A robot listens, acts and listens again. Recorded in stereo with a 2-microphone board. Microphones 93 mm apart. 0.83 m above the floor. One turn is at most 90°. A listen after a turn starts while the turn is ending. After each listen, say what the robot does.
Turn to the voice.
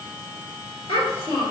Turn 90° left.
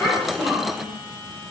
Found it: a child speaking, straight ahead, 1 to 2 m away.